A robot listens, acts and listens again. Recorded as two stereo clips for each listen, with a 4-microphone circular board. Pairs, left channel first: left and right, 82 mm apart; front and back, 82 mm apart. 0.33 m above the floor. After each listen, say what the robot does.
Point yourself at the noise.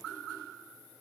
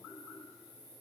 Keep listening.
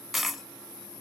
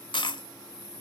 Facing the dropped coin.